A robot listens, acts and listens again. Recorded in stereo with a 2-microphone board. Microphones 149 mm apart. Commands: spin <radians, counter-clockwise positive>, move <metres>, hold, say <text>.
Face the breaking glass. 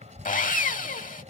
hold
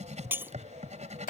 spin -0.52
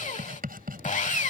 hold
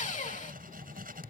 say I heard breaking glass, but can't make it out now. It was about 15° left or 135° right.